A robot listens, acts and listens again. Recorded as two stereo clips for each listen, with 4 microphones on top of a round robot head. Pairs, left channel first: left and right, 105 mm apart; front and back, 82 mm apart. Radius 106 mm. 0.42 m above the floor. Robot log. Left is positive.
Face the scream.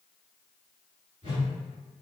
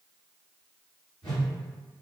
cmd idle
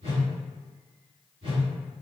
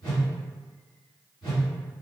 cmd idle
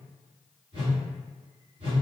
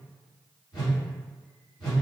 end: I can't make out a scream, only a whoosh.